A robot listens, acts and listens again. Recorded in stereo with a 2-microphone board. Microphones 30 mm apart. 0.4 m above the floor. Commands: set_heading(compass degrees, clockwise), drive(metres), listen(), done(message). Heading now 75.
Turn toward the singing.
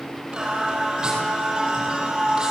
set_heading(100)
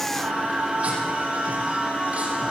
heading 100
set_heading(235)
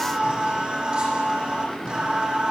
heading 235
set_heading(275)
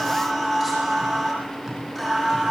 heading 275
done("Found it: singing, straight ahead.")